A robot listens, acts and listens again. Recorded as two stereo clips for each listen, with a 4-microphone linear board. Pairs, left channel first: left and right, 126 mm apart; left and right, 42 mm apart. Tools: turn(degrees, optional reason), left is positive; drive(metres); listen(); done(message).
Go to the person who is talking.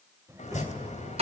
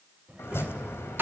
turn(degrees=-25, reason="The child speaking: about 25° right or 155° right.")
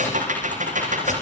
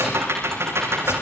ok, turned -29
listen()
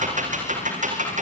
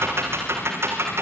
listen()
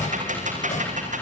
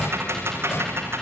done("I heard a child speaking, but can't make it out now. It was about 5° left or 130° right. I did not reach it.")